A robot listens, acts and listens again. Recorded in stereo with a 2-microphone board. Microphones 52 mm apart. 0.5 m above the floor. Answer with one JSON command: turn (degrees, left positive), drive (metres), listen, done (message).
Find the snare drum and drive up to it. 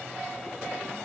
{"listen": true}
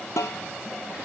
{"turn": 90}
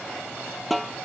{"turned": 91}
{"drive": 1.0}
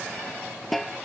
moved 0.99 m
{"drive": 1.0}
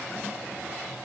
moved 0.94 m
{"listen": true}
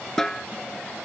{"turn": 10}
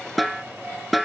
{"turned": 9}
{"drive": 1.0}
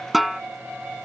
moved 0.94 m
{"drive": 1.0}
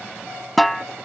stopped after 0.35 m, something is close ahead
{"done": "Arrived at the snare drum, straight ahead."}